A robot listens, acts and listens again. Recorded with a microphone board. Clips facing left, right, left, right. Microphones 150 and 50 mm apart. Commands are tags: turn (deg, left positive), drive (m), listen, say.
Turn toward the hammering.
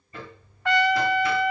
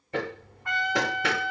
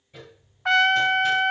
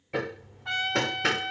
<turn deg="-90"/>
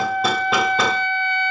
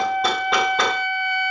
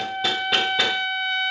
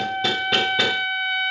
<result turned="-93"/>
<say>Facing the hammering, under 1 m away.</say>